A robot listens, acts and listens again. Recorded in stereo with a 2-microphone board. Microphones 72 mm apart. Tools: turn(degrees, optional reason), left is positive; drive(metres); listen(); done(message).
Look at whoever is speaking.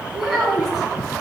turn(degrees=30)
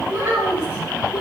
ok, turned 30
turn(degrees=-20, reason="So it is at 20° right.")
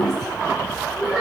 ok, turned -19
turn(degrees=10, reason="The child speaking is now 10° left.")
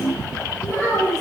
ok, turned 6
done("Found it: a child speaking, straight ahead, over 4 m away.")